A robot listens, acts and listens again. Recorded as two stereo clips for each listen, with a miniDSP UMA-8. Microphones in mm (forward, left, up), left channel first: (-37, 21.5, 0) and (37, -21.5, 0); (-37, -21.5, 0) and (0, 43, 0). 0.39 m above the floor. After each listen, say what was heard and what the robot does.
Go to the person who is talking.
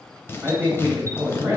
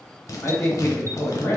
The man speaking: 90° right. Turn 90° right.
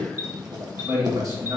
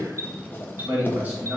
Drive 1.0 m forward.
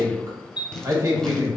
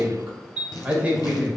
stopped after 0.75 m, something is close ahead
I am next to the man speaking.